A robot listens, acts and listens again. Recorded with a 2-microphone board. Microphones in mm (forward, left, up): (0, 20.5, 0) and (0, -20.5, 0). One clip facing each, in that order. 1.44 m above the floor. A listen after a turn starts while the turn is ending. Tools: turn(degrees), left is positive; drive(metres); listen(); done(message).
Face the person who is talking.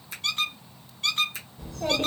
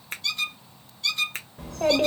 turn(degrees=-70)
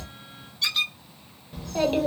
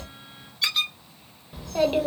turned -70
turn(degrees=-10)
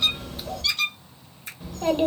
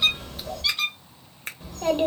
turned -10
done("Found it: a child speaking, straight ahead, 1 to 2 m away.")